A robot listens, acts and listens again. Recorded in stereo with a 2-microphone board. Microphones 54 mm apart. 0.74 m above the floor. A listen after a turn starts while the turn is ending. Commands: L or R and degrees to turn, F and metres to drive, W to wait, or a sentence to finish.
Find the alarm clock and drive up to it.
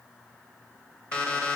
L20
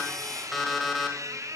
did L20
F1.0
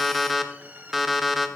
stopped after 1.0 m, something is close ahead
Arrived at the alarm clock, straight ahead.